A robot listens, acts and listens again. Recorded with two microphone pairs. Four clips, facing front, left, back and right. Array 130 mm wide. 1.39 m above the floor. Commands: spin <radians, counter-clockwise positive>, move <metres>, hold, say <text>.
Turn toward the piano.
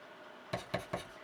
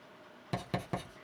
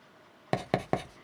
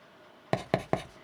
hold
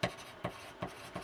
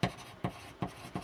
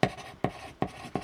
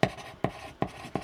hold
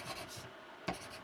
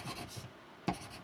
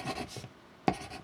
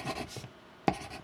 say I can't make out a piano to turn to.